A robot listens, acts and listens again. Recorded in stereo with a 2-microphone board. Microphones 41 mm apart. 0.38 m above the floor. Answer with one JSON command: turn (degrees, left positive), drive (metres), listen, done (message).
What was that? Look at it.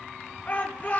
{"turn": 40}
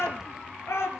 {"turn": 100}
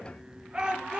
{"turn": -20}
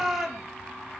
{"done": "Found it: a shout, straight ahead, over 4 m away."}